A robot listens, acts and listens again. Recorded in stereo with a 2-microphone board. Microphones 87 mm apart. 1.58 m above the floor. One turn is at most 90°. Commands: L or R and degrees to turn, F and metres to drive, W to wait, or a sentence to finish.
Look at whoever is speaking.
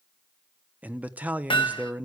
R15
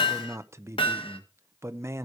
R90
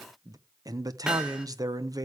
R45
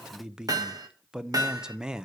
R10
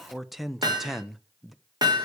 Found it: a man speaking, straight ahead, 1 to 2 m away.